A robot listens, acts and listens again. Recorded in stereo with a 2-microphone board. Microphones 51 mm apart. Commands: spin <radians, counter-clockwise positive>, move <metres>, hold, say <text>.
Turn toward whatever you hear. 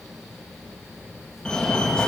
spin 0.26
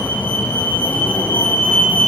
spin 2.62
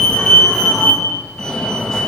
spin 0.26
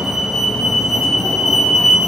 say Found it: a fire alarm, straight ahead, 2 to 4 m away.